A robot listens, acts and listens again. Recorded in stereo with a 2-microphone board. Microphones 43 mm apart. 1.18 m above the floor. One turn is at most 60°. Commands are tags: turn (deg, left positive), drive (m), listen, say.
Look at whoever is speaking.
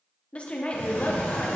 <turn deg="30"/>
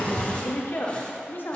<turn deg="60"/>
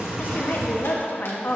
<turn deg="55"/>
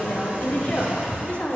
<turn deg="35"/>
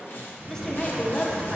<listen/>
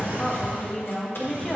<turn deg="15"/>
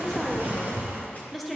<say>Facing the woman speaking.</say>